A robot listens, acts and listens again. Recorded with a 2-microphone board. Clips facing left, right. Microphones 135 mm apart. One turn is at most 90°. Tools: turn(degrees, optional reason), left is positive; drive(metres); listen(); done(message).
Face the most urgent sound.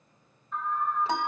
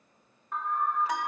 turn(degrees=-70, reason="The alarm: about 70° right or 110° right.")
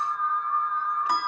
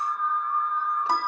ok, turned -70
turn(degrees=-10, reason="So it is at 10° right.")
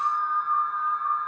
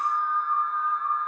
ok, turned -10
done("Found it: an alarm, straight ahead, 2 to 4 m away.")